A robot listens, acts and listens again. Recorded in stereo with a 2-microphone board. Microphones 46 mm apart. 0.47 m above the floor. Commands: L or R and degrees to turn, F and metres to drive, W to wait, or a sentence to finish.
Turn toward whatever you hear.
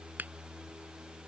R40
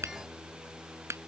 R105
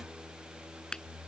L15
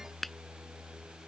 Facing the finger snap.